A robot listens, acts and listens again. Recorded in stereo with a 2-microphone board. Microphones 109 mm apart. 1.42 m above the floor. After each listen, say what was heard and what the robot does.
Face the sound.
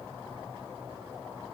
Keep listening.
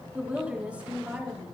The woman speaking: about 15° right or 165° right. Turn 15° right.
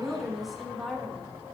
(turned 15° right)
Turn 30° left.
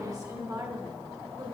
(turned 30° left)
So it is at 40° right. Turn 40° right.
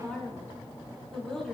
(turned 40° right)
Found it: a woman speaking, straight ahead, over 4 m away.